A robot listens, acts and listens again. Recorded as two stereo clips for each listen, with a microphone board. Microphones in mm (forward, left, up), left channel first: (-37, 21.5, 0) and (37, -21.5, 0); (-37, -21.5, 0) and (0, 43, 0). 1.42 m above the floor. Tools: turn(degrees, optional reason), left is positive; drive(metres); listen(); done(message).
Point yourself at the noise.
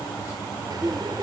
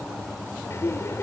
turn(degrees=-65, reason="The laughter: 65° right.")
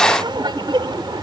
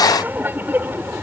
done("Facing the laughter.")